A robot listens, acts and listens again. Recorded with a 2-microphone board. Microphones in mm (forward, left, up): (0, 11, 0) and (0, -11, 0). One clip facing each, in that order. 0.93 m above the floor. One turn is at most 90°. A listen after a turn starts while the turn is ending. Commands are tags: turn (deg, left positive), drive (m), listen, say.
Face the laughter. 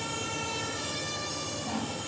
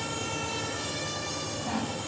<listen/>
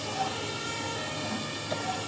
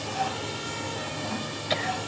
<turn deg="-90"/>
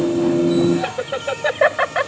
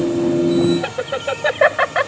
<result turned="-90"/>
<turn deg="-10"/>
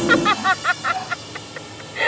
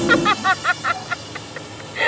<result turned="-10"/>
<say>Facing the laughter.</say>